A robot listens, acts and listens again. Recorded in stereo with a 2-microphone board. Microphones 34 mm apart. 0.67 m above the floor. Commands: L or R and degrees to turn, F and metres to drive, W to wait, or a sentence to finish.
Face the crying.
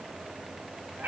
W
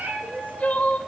L55
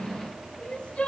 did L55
L50
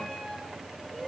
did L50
W
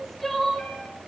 Found it: crying, straight ahead, 2 to 4 m away.